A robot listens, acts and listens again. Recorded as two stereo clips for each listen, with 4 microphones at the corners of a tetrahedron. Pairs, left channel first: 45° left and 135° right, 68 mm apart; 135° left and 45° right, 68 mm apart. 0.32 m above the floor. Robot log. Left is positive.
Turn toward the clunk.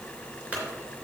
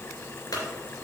note: The clunk: 155° left.
cmd yaw +155
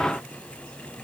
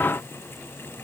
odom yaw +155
end: Facing where the clunk came from. I can't hear it now.